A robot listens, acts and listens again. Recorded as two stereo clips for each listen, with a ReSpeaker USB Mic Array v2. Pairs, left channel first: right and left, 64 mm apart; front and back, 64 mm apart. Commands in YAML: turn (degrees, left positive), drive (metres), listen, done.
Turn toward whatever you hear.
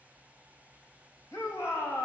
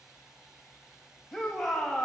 turn: -85
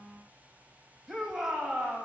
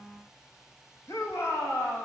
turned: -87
done: "Found it: a shout, straight ahead, 2 to 4 m away."